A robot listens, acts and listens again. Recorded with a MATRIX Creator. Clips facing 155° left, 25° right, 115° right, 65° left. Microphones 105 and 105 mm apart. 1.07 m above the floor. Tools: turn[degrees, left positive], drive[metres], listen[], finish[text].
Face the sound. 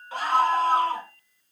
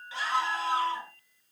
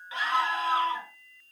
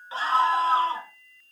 Thought: The scream: 125° left.
Action: turn[125]
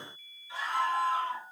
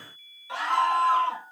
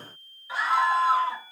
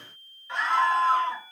Thought: The scream is now 25° right.
Action: turn[-25]
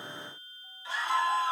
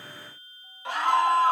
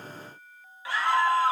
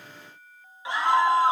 Action: finish[Found it: a scream, straight ahead, 1 to 2 m away.]